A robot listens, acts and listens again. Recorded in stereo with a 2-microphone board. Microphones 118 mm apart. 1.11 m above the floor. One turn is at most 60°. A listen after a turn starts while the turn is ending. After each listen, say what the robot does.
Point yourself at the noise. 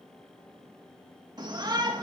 Turn 35° right.
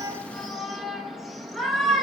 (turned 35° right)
Found it: a shout, straight ahead, 1 to 2 m away.